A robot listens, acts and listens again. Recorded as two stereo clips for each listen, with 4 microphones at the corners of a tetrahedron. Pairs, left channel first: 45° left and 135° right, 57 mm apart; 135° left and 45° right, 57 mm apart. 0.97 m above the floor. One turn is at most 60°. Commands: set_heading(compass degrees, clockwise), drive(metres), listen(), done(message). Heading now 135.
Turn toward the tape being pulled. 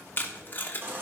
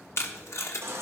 set_heading(75)
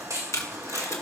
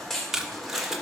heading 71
set_heading(36)
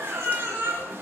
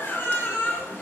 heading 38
listen()
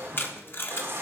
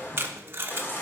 done("Found it: tape being pulled, straight ahead.")